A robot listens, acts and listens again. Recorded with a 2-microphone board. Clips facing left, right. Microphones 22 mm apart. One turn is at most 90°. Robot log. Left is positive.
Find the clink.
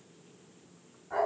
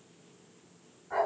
cmd idle
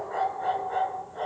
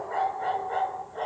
cmd idle
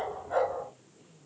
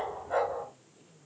end: I can't make out a clink, only a dog barking.